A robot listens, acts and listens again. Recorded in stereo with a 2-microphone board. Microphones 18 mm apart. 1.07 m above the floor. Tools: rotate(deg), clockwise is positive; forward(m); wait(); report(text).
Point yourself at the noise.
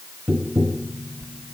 rotate(90)
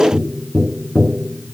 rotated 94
rotate(-10)
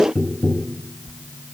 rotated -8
report("Found it: tapping, straight ahead.")